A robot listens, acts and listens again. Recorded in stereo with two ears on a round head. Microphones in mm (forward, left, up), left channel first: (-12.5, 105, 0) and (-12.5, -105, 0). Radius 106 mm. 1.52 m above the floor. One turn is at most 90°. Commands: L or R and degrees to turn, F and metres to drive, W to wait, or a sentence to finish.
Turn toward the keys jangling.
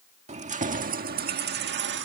R55
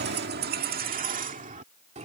R30
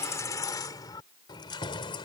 L20
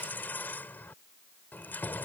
L10
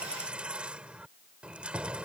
Found it: keys jangling, straight ahead.